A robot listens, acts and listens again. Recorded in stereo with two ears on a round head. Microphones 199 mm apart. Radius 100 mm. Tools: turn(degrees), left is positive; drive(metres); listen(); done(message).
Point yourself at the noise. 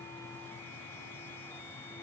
listen()
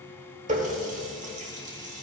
turn(degrees=-35)
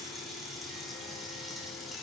done("Found it: a running tap, straight ahead, 1 to 2 m away.")